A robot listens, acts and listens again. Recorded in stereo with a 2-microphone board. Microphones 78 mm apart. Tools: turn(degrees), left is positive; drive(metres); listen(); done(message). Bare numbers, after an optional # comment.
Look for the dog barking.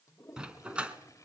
turn(-30)
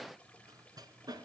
# So it is at 125° right.
turn(-125)
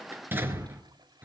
# The dog barking is now 25° right.
turn(-25)
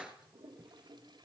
# The dog barking is now 10° right.
turn(-10)
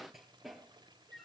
done("Found it: a dog barking, straight ahead, 2 to 4 m away.")